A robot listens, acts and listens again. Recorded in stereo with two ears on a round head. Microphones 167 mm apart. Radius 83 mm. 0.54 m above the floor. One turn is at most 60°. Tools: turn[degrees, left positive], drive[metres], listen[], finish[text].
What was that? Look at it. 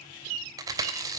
Thought: The chewing: about 20° right or 160° right.
Action: turn[-20]
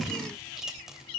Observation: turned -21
Action: listen[]
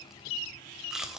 Action: finish[Found it: chewing, straight ahead, 2 to 4 m away.]